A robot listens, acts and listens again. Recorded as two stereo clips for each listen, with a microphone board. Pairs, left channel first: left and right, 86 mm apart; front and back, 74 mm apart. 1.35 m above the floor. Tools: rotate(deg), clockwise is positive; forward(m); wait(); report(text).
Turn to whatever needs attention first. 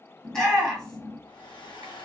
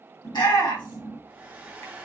report("Found it: a shout, straight ahead.")